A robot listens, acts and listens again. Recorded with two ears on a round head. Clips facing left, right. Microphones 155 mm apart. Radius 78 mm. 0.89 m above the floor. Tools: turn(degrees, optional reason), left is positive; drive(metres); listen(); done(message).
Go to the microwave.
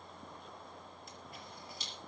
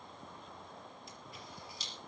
listen()
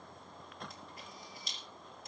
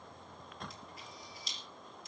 listen()
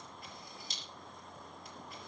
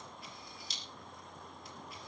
done("I can't make out a microwave to turn to.")